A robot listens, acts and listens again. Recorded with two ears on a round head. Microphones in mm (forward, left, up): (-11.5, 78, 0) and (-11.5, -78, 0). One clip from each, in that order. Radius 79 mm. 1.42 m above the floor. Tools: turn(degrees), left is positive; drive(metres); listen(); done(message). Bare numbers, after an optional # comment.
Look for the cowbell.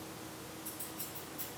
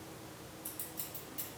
listen()
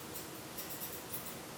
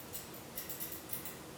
listen()
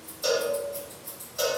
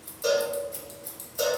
# The cowbell: about 25° left or 155° left.
turn(25)
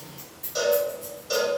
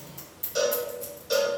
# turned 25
done("Facing the cowbell, 1 to 2 m away.")